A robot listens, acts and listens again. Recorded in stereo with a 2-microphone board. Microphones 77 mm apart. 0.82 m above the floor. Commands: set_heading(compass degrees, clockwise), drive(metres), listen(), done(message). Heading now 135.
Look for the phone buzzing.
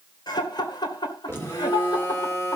set_heading(105)
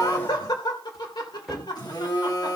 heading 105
set_heading(345)
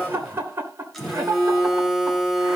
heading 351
done("Facing the phone buzzing, 2 to 4 m away.")